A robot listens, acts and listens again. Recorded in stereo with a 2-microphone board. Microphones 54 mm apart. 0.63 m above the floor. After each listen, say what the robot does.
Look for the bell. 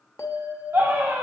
Turn 75° left.
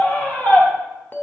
Turn 30° left.
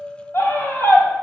Facing the bell, under 1 m away.